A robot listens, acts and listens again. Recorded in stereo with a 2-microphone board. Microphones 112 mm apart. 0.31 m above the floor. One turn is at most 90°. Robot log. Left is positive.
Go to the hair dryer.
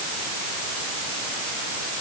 cmd idle
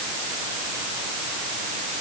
cmd idle
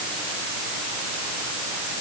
end: I can't make out a hair dryer to turn to.